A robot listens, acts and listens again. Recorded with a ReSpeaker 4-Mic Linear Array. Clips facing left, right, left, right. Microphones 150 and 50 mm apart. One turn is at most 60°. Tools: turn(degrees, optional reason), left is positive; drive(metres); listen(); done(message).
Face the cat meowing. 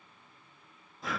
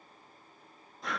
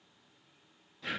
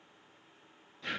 listen()
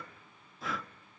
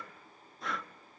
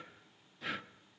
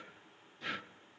listen()
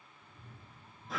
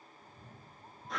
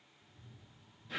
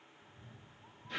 turn(degrees=-50, reason="The cat meowing: about 50° right or 130° right.")
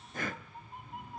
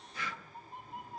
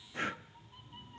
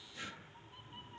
done("Found it: a cat meowing, straight ahead.")